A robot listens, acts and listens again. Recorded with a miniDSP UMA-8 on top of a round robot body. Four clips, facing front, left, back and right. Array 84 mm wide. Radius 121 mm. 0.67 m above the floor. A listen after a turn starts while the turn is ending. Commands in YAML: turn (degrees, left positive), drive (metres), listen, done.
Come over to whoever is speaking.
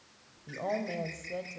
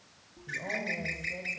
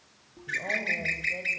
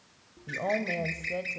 turn: -75
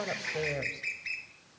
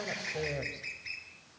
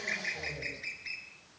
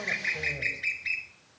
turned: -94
turn: 20
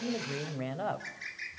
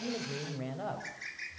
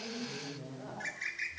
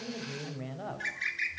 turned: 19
drive: 1.0
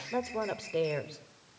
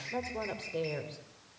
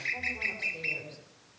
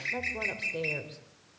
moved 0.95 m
drive: 1.0
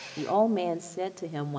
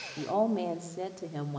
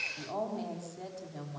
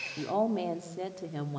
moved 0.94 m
drive: 1.0
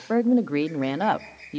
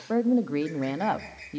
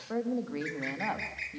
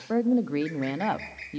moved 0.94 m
drive: 1.0
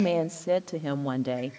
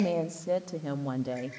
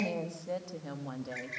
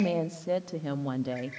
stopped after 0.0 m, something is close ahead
turn: -10
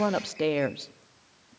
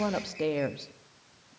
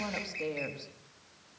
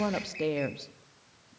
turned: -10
done: "Arrived at the woman speaking, straight ahead."